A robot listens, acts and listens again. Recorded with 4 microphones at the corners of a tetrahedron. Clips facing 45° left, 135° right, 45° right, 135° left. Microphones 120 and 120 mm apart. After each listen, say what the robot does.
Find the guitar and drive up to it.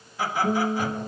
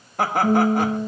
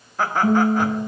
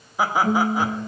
Turn 85° right.
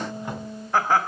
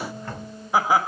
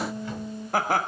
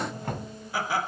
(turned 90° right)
Drive 1.0 m forward.
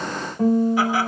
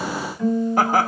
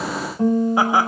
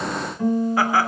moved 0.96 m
Turn 10° left.
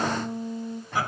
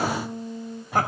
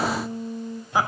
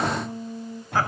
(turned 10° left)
Drive 1.0 m forward.
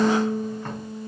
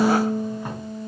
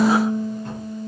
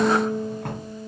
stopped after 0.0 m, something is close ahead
Something is in my way. I am facing the guitar but have not reached it.